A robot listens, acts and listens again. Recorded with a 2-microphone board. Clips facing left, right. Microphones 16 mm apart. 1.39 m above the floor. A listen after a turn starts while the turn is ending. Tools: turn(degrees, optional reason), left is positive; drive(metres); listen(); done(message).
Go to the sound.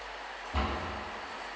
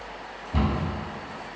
turn(degrees=-15, reason="The cupboard door: about 15° right or 165° right.")
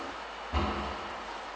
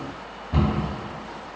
turn(degrees=-150, reason="So it is at 150° right.")
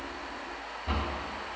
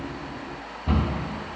turn(degrees=-15, reason="The cupboard door is now 15° right.")
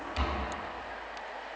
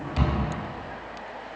drive(metres=1.0)
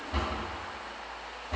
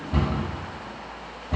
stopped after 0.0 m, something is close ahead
done("Something is in my way. I am facing the cupboard door but have not reached it.")